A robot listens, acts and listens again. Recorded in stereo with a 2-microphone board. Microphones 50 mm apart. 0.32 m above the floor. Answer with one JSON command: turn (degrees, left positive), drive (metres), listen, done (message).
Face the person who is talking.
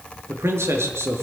{"turn": -60}
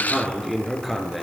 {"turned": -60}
{"done": "Facing the man speaking, over 4 m away."}